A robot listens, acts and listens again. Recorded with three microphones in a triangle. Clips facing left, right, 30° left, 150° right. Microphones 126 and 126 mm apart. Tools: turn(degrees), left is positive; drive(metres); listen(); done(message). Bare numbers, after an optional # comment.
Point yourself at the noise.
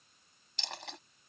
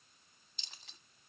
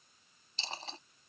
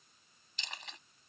# The dropped coin: 85° left.
turn(85)
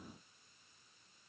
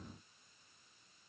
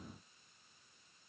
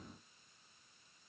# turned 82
done("I heard a dropped coin from this way, but can't make it out now.")